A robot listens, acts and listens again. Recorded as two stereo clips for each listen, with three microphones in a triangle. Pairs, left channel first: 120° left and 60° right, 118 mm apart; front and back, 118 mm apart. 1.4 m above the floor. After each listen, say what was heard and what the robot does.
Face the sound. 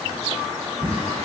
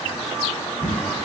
The drawer: 70° right. Turn 70° right.
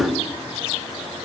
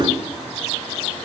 Keep listening.
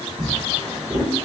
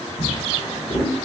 The drawer is now 30° right. Turn 30° right.
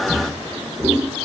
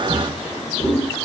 The drawer is now 20° right. Turn 20° right.
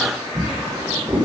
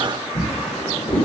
Facing the drawer, 1 to 2 m away.